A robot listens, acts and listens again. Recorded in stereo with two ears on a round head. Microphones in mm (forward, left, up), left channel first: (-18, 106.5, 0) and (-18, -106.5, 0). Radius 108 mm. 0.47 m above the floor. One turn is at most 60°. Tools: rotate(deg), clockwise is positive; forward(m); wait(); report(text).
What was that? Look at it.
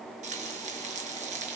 rotate(30)
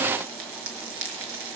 rotate(60)
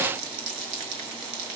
rotate(60)
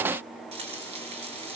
rotate(25)
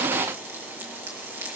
rotate(10)
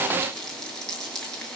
report("Facing the frying, over 4 m away.")